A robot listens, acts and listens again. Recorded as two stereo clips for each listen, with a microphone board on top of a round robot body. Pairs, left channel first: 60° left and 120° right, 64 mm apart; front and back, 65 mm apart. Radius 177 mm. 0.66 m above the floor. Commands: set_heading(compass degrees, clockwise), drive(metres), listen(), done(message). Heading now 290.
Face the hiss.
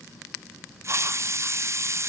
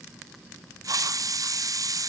set_heading(90)
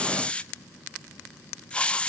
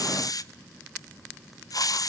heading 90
set_heading(100)
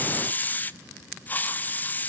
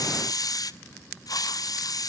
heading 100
done("Facing the hiss.")